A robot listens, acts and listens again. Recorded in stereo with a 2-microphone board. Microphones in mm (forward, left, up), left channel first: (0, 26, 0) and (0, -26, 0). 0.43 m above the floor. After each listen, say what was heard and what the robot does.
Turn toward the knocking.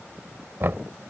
The knocking: about 50° right or 130° right. Turn 50° right.
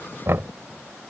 So it is at 75° right. Turn 75° right.
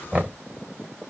The knocking is now 30° right. Turn 30° right.
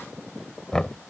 The knocking is now 15° left. Turn 15° left.
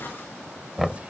Facing the knocking.